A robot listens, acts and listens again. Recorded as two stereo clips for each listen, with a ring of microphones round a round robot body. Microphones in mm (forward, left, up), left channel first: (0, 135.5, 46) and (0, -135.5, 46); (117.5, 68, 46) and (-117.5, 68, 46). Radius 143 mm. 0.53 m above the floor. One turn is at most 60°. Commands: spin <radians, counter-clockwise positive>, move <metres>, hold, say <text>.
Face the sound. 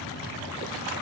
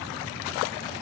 hold
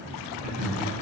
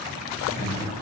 spin -1.05
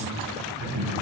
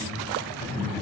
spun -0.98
spin -1.05
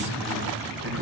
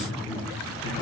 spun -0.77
spin -0.79
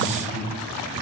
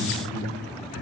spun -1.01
say Found it: laughter, straight ahead, 2 to 4 m away.